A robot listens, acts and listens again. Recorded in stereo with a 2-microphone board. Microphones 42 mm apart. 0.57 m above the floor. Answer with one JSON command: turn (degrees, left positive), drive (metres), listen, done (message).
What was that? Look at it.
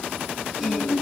{"turn": -30}
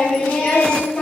{"turn": 15}
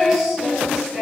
{"done": "Found it: singing, straight ahead."}